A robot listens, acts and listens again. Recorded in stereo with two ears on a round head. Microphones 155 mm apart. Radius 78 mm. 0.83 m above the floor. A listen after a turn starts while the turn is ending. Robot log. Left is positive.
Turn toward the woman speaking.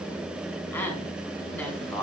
cmd yaw +30
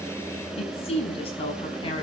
note: So it is at 150° left.
cmd yaw +150
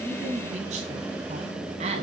note: The woman speaking is now 35° right.
cmd yaw -35
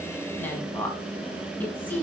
note: The woman speaking is now 10° left.
cmd yaw +10
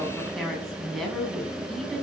end: Facing the woman speaking.